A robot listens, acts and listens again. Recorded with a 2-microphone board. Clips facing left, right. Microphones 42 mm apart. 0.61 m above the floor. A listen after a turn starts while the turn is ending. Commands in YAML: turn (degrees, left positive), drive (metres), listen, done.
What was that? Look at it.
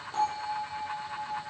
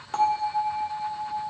turn: -65
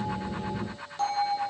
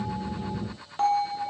turn: -30
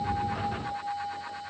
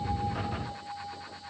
turn: 20
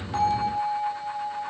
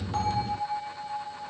done: "Facing the bell."